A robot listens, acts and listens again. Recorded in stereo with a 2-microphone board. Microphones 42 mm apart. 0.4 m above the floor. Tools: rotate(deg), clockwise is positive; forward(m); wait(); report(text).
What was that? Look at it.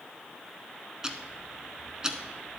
rotate(20)
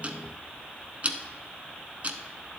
rotate(140)
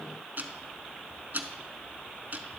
rotate(50)
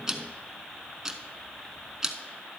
rotate(15)
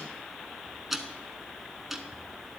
report("Found it: ticking, straight ahead.")